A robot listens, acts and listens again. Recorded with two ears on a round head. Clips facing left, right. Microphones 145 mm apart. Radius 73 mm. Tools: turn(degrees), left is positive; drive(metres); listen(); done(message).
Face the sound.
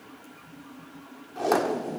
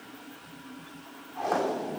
turn(degrees=50)
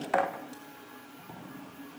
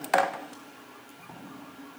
done("Facing the tape being pulled, 2 to 4 m away.")